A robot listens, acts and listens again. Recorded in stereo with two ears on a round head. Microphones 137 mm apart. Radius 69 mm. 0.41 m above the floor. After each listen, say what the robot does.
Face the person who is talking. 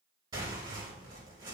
Keep listening.
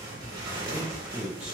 Turn 30° right.
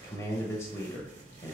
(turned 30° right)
Turn 20° left.
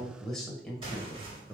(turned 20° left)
Found it: a man speaking, straight ahead, 1 to 2 m away.